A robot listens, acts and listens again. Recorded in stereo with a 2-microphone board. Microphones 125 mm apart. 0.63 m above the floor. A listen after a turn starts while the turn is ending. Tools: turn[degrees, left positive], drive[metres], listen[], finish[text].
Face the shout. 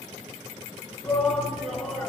Action: turn[30]
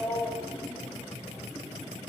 Thought: So it is at 145° left.
Action: turn[145]
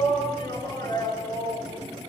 Thought: The shout is now 30° left.
Action: turn[30]
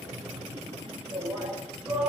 Action: finish[Found it: a shout, straight ahead.]